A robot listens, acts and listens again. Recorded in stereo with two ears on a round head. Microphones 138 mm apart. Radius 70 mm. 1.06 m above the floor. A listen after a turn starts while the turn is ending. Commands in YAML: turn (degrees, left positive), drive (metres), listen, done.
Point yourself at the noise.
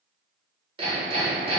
turn: -40
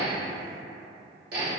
turn: -100
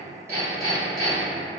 done: "Found it: hammering, straight ahead."